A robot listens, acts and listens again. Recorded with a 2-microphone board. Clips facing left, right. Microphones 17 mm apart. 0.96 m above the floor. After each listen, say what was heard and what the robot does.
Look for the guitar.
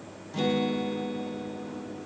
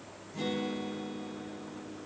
The guitar: about 70° left or 110° left. Turn 70° left.
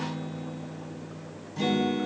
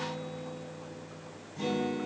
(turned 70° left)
So it is at 40° left. Turn 40° left.
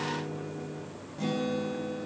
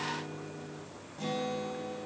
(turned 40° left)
Found it: a guitar, straight ahead, 2 to 4 m away.